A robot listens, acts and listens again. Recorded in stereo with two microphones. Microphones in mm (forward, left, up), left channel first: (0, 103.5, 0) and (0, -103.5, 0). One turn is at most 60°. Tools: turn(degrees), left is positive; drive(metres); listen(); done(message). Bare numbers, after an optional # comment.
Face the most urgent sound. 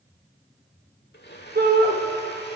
# The shout: about 45° right or 135° right.
turn(-45)
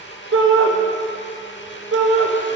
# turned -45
# So it is at 90° right.
turn(-60)
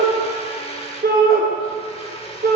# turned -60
# The shout is now 45° right.
turn(-45)
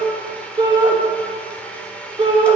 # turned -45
# The shout is now 20° right.
turn(-20)
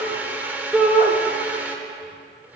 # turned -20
done("Facing the shout, 1 to 2 m away.")